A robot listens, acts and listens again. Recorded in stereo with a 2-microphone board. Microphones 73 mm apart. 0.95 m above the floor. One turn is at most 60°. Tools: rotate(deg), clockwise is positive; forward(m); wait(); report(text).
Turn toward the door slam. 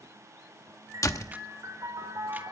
rotate(-55)
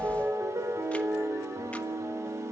wait()
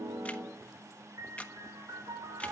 report("I heard a door slam, but can't make it out now. It was about straight ahead or 70° left.")